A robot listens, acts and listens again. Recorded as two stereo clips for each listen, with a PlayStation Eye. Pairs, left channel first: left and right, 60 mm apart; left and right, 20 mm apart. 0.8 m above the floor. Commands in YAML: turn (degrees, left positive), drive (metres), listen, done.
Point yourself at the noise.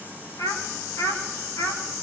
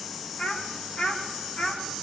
turn: 90
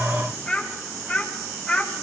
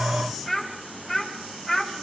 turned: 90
turn: 10
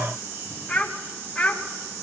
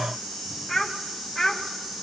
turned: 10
turn: 10
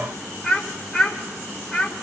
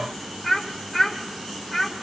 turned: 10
done: "Found it: a child speaking, straight ahead, 1 to 2 m away."